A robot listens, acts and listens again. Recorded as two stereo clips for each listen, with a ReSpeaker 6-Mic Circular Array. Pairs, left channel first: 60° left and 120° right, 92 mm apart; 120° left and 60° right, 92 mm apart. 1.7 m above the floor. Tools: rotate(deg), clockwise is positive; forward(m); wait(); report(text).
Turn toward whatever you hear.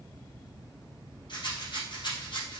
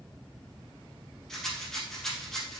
rotate(-35)
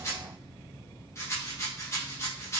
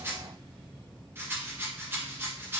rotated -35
report("Found it: a rattle, straight ahead.")